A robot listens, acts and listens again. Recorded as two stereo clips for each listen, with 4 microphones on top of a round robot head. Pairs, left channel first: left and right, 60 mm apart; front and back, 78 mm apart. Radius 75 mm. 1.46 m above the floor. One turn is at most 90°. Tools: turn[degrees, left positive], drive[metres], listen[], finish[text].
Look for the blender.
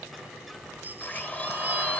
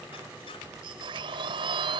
Thought: The blender: 160° left.
Action: turn[90]
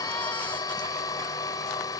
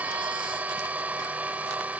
Thought: The blender is now 105° left.
Action: turn[90]
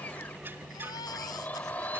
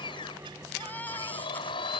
Thought: The blender is now 15° left.
Action: turn[15]
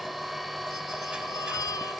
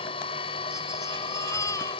Action: finish[Facing the blender.]